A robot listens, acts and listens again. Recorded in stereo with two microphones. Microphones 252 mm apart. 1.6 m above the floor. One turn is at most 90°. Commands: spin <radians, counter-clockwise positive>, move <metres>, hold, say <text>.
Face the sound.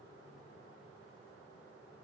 hold
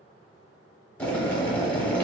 spin 0.52
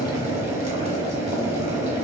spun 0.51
spin -0.44
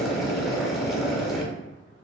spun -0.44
say Found it: boiling, straight ahead.